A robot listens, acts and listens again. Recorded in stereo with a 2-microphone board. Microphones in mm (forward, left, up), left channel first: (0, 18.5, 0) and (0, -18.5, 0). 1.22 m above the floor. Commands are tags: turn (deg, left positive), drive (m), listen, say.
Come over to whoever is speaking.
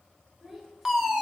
<turn deg="-30"/>
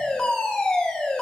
<listen/>
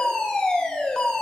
<listen/>
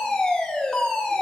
<say>I heard a child speaking, but can't make it out now. It was about 25° left or 145° right. I did not reach it.</say>